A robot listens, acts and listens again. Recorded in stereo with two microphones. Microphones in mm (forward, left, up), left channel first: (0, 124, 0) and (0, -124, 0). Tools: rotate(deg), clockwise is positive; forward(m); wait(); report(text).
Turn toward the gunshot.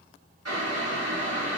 wait()
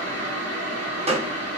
rotate(25)
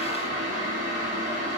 wait()
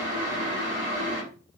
report("I heard a gunshot, but can't make it out now. It was about straight ahead or 130° right.")